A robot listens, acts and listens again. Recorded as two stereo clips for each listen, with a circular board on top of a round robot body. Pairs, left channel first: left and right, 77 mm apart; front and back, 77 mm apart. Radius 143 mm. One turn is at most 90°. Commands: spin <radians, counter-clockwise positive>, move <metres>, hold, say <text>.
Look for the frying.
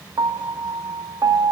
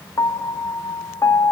hold
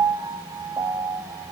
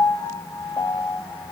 hold
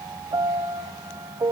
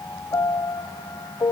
say I can't make out frying to turn to.